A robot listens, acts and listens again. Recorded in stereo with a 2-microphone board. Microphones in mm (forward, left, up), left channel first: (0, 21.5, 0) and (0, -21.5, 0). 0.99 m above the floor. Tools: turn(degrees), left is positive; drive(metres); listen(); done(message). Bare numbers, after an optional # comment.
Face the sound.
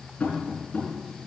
# The tapping: about 35° left or 145° left.
turn(35)
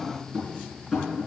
done("Facing the tapping.")